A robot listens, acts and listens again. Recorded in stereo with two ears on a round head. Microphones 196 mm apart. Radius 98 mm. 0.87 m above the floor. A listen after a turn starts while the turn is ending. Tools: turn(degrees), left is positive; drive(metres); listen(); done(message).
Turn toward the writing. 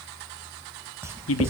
turn(degrees=-30)
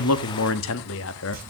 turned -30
listen()
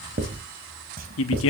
turn(degrees=-135)
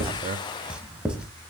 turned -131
done("Facing the writing.")